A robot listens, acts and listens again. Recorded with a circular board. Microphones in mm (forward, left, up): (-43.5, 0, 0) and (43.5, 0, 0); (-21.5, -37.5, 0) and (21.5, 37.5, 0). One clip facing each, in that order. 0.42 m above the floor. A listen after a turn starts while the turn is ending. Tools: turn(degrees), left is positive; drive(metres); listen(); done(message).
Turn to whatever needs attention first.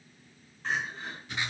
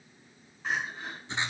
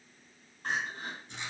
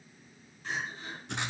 turn(degrees=-80)
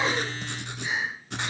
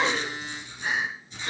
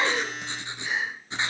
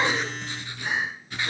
turn(degrees=30)
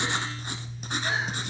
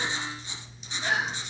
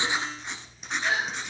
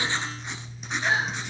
done("Facing the crying, 2 to 4 m away.")